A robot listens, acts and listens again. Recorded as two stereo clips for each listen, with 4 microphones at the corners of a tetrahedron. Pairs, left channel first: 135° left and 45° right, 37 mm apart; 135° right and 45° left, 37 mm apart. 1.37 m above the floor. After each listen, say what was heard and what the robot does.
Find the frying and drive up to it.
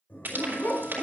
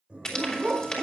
The frying: 65° right. Turn 65° right.
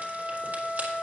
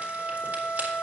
Keep listening.
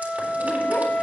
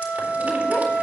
Keep listening.
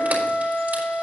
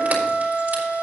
Facing where the frying came from. I can't hear it now. I did not reach it.